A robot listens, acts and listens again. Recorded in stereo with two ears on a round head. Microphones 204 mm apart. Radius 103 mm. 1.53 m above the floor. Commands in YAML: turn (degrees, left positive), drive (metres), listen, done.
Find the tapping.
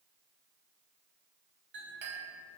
listen: true
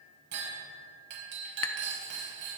turn: 60
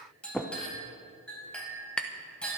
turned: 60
done: "Found it: tapping, straight ahead."